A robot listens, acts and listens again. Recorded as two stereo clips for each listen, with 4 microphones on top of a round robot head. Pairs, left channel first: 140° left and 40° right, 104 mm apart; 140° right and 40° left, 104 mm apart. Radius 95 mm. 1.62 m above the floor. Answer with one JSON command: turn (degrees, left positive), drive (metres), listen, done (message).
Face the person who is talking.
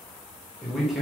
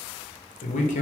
{"turn": -125}
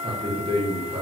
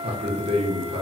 {"done": "Facing the man speaking."}